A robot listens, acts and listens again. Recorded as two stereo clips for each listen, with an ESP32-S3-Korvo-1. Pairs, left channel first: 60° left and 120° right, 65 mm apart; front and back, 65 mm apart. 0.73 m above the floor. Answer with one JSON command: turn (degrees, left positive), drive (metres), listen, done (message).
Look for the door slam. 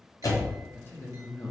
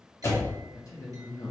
{"turn": 40}
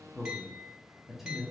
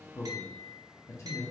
{"done": "I heard a door slam from this way, but can't make it out now."}